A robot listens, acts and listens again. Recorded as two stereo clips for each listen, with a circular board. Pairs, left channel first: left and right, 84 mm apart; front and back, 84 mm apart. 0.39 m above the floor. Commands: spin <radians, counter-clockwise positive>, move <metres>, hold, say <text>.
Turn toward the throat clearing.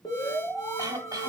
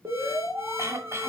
spin -2.27
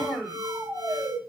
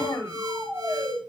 spin 0.17
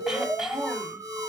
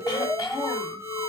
hold
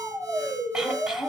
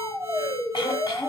hold
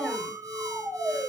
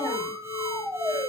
say I heard throat clearing from this way, but can't make it out now.